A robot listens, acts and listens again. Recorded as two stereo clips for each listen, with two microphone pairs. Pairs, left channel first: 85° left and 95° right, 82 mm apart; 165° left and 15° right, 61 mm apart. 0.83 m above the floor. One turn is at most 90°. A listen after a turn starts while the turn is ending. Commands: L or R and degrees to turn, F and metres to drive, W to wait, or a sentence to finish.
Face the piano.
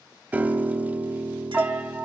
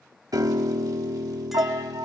R25
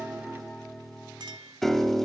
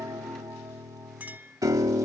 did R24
Facing the piano, 1 to 2 m away.